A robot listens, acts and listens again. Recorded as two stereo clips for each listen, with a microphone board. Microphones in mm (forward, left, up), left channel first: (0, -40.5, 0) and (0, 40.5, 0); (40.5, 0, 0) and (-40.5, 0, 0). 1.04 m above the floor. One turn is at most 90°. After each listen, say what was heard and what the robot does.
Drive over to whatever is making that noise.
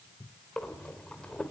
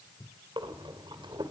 The breathing: 170° right. Turn 90° right.
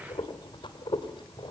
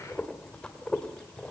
The breathing is now 80° right. Turn 80° right.
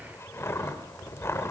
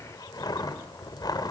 The breathing is now 35° right. Turn 35° right.
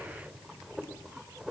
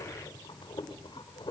The breathing is now 10° left. Turn 10° left.
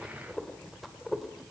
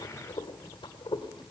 Drive 1.0 m forward.
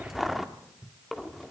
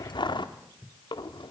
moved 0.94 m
Drive 1.0 m forward.
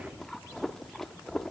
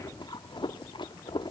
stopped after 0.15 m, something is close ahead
I am next to the breathing.